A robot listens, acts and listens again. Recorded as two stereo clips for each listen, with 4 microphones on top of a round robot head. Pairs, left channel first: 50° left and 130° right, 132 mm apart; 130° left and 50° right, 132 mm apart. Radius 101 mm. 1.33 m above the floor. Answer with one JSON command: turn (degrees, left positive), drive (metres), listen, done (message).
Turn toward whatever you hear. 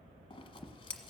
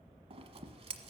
{"done": "Found it: scissors, straight ahead."}